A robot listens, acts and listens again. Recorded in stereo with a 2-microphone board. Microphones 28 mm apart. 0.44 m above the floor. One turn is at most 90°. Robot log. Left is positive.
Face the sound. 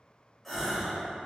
cmd yaw +30
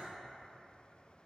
cmd idle
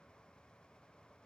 end: I heard a gasp, but can't make it out now. It was about 30° right or 150° left.